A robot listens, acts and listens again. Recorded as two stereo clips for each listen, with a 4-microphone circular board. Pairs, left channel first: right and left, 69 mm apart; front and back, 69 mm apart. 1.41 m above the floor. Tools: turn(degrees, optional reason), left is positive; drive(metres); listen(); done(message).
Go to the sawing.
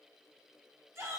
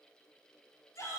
listen()
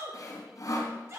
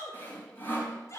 turn(degrees=-60, reason="The sawing: 60° right.")
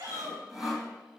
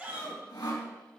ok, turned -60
drive(metres=1.0)
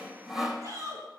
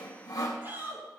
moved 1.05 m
turn(degrees=10, reason="The sawing is now 10° left.")
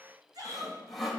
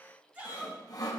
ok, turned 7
drive(metres=1.0)
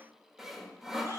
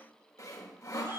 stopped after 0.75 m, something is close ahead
turn(degrees=10, reason="The sawing is now 10° left.")
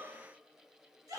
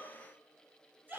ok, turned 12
listen()
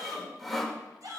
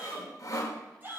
done("I am next to the sawing.")